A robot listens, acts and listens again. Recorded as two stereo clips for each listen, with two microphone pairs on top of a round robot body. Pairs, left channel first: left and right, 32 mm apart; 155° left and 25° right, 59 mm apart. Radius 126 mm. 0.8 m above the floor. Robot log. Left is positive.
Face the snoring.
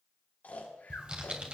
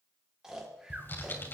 note: The snoring: 55° left.
cmd yaw +55
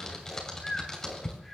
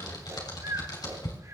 end: Facing the snoring.